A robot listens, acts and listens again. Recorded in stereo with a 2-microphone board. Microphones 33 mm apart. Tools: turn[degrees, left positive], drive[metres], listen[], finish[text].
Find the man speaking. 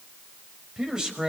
Thought: The man speaking: about 20° right or 160° right.
Action: turn[-20]
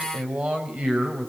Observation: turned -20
Thought: The man speaking: about 40° right or 140° right.
Action: turn[-40]
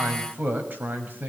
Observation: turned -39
Thought: So it is at 105° right.
Action: turn[-105]
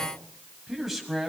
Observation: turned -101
Action: finish[Found it: a man speaking, straight ahead, over 4 m away.]